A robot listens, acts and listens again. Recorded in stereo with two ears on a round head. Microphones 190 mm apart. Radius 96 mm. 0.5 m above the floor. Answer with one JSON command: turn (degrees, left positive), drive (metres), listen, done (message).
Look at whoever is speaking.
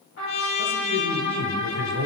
{"turn": -50}
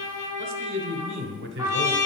{"turn": -70}
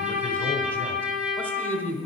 {"turn": 10}
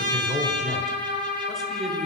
{"done": "Facing the man speaking, 1 to 2 m away."}